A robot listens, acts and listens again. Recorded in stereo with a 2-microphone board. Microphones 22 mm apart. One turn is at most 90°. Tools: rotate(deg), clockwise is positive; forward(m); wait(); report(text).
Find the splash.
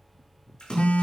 rotate(-45)
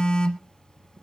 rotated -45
wait()
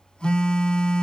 report("I heard a splash, but can't make it out now. It was about straight ahead or 90° left.")